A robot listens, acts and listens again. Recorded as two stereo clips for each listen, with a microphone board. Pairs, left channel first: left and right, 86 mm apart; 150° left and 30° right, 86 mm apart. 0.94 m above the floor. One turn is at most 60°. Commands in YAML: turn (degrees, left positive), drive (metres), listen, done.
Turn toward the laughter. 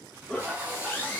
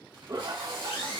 turn: 15
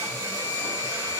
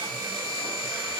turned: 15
listen: true
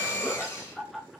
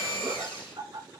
done: "Found it: laughter, straight ahead, under 1 m away."